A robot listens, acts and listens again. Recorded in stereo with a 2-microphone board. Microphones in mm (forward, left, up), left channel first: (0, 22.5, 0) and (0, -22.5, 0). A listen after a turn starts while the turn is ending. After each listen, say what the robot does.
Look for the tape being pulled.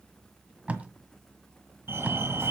Turn 30° right.
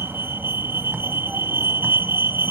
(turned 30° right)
Keep listening.
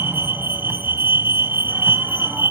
Keep listening.
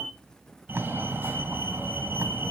Turn 115° right.
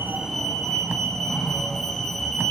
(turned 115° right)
Keep listening.
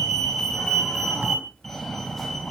Keep listening.
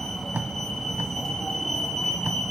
Turn 50° right.
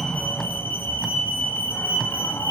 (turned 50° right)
Facing the tape being pulled.